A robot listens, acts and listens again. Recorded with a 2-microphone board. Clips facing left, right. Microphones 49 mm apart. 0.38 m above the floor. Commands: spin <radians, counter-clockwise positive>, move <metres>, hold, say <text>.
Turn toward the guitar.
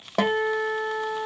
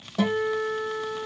spin 1.05
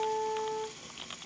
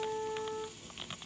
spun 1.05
spin 0.35
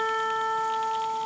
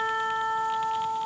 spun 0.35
say Found it: a guitar, straight ahead.